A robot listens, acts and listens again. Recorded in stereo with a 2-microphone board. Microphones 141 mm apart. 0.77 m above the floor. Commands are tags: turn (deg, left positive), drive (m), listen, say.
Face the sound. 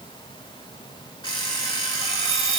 <turn deg="30"/>
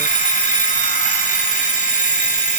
<turn deg="120"/>
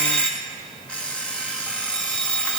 <turn deg="10"/>
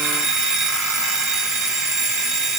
<say>Facing the alarm clock.</say>